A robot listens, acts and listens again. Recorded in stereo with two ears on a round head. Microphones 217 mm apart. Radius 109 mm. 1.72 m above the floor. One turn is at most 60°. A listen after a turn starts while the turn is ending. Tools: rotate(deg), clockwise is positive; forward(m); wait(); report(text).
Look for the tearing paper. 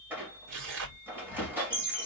rotate(55)
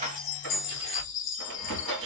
wait()
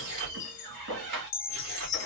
rotate(60)
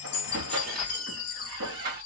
wait()
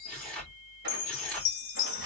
report("Facing the tearing paper, 2 to 4 m away.")